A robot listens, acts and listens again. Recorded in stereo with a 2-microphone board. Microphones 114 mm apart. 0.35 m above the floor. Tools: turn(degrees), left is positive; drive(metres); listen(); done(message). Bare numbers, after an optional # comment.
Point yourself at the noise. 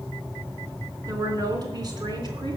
# The woman speaking: about 40° right or 140° right.
turn(-40)
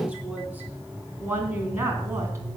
# So it is at 25° right.
turn(-25)
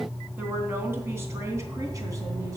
# The woman speaking is now 30° right.
turn(-30)
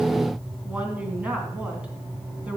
# The woman speaking is now 10° right.
turn(-10)
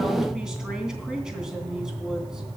done("Found it: a woman speaking, straight ahead, 2 to 4 m away.")